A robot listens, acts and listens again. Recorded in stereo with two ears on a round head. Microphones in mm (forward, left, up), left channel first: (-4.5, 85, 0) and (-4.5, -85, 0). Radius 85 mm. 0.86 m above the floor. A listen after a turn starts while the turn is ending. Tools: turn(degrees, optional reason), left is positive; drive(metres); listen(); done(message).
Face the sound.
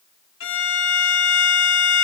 turn(degrees=70, reason="The violin: about 70° left or 110° left.")
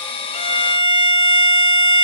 turn(degrees=25, reason="So it is at 25° left.")
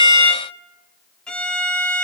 done("Found it: a violin, straight ahead.")